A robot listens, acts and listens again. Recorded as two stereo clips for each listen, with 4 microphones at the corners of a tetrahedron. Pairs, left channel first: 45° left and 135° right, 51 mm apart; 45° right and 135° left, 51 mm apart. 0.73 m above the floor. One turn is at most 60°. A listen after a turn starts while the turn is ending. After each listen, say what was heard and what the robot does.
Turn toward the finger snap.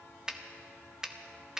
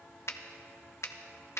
The finger snap: 60° right. Turn 60° right.
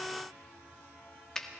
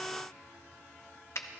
The finger snap is now 30° right. Turn 30° right.
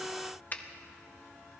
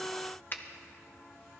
Facing the finger snap, under 1 m away.